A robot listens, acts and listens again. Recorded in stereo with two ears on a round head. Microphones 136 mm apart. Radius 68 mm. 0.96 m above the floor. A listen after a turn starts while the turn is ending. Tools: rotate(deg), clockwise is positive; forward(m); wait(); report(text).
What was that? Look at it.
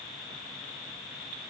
wait()
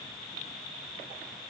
wait()
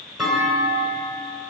rotate(-30)
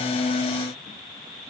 wait()
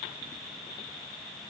report("I heard a clunk, but can't make it out now. It was about 30° right or 150° left.")